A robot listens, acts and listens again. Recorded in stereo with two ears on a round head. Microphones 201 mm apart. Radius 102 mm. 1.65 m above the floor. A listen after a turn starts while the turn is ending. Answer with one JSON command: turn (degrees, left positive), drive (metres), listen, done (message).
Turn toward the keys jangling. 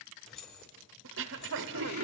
{"turn": 60}
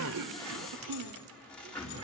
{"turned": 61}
{"listen": true}
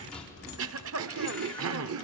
{"listen": true}
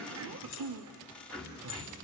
{"done": "I heard keys jangling, but can't make it out now. It was about straight ahead or 60° left."}